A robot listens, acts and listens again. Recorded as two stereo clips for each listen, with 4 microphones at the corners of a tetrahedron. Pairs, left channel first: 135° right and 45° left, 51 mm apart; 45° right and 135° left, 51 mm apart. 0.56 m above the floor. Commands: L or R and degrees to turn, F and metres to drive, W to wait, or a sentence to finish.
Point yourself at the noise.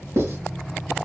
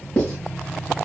L25
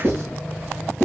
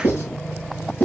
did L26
Facing the writing.